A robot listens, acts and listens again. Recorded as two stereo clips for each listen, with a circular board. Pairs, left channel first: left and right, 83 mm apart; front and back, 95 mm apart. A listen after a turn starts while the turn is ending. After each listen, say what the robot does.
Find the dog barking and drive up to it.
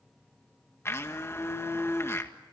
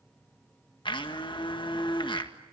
Keep listening.
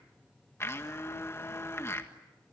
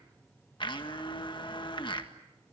Keep listening.
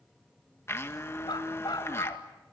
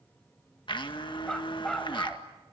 Turn 85° left.
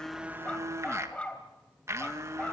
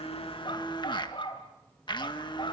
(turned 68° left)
Turn 15° left.
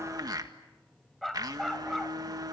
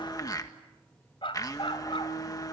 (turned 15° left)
Drive 1.0 m forward.
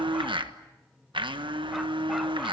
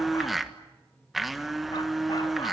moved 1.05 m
Keep listening.
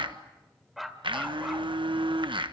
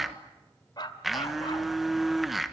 Drive 1.0 m forward.
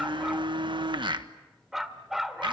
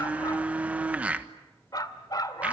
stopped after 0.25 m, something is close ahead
I am next to the dog barking.